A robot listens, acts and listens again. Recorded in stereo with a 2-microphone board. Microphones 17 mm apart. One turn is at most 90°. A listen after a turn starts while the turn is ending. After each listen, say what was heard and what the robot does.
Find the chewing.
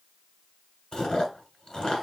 The chewing: about 65° left or 115° left. Turn 65° left.
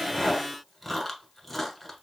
So it is at 15° left. Turn 15° left.
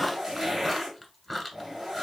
Facing the chewing, 1 to 2 m away.